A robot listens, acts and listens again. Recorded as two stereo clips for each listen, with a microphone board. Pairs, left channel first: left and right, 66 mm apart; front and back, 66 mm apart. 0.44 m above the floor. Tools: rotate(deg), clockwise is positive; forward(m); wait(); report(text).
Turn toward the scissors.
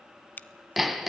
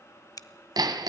rotate(-25)
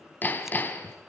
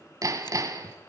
wait()
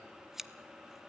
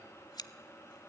report("Facing the scissors.")